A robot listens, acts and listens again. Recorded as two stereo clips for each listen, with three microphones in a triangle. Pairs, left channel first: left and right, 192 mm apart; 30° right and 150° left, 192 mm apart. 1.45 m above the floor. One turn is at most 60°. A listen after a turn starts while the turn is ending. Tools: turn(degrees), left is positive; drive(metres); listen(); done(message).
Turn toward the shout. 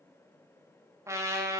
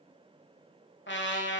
listen()
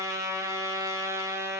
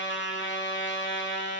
listen()
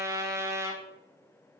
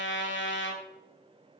done("I can't make out a shout to turn to.")